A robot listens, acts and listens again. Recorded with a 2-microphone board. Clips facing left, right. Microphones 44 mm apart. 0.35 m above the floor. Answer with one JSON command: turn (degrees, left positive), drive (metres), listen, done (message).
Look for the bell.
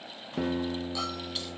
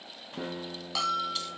{"turn": -90}
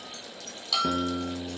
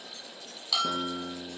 {"done": "Found it: a bell, straight ahead."}